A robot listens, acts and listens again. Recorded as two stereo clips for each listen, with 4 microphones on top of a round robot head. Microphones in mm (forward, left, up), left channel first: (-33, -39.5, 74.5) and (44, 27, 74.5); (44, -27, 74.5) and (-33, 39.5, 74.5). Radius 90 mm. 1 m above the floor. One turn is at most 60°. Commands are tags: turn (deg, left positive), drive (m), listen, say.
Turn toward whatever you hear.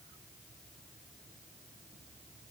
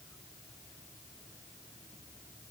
<listen/>
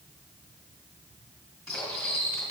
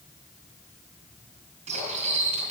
<turn deg="60"/>
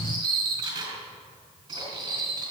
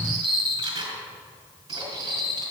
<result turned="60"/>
<turn deg="60"/>
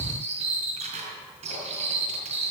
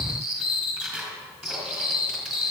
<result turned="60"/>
<turn deg="50"/>
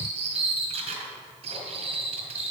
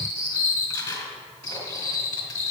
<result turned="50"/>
<turn deg="15"/>
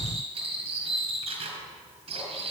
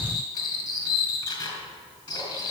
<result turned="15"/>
<turn deg="10"/>
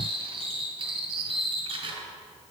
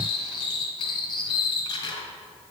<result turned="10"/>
<say>Facing the cutlery clinking, over 4 m away.</say>